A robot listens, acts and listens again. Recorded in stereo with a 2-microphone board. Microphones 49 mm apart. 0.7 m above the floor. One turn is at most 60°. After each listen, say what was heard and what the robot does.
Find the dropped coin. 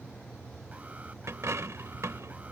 Turn 60° right.
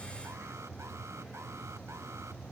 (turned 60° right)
Nothing new. It was at 30° right. Turn 30° right.
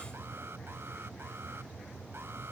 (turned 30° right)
Facing where the dropped coin came from. I can't hear it now.